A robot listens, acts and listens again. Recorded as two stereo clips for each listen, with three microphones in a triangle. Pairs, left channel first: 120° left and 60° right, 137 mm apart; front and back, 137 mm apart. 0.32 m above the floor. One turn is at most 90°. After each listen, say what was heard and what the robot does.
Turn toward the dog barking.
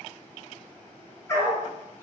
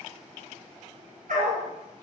The dog barking: 170° right. Turn 90° right.
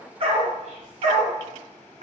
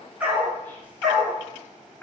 The dog barking is now 90° right. Turn 90° right.
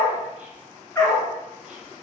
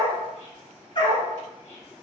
The dog barking is now 50° left. Turn 50° left.
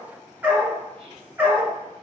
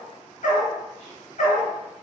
The dog barking is now 15° left. Turn 15° left.
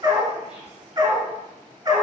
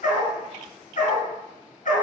Found it: a dog barking, straight ahead, 1 to 2 m away.